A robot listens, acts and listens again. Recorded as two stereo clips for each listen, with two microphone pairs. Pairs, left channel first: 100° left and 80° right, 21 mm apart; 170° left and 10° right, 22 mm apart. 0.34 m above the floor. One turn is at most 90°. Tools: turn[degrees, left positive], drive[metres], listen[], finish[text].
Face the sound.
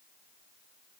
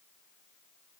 Action: listen[]
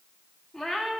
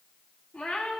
Thought: The cat meowing: straight behind.
Action: turn[90]
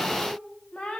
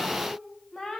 Thought: The cat meowing is now 125° left.
Action: turn[90]
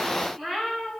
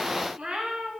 Thought: The cat meowing is now 15° left.
Action: turn[15]
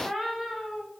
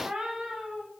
Action: finish[Found it: a cat meowing, straight ahead.]